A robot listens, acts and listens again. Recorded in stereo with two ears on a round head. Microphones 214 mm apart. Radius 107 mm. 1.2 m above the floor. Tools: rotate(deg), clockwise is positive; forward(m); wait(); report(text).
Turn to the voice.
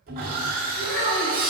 rotate(-50)
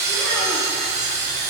wait()
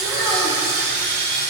wait()
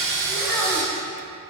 report("Facing the child speaking.")